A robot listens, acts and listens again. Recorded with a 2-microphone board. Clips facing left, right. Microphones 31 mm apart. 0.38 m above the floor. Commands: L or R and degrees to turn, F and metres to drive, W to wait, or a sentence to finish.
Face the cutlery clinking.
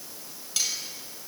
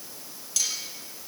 L20
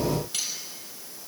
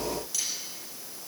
L140
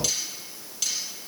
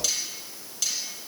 L10
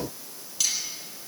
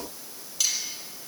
Found it: cutlery clinking, straight ahead, over 4 m away.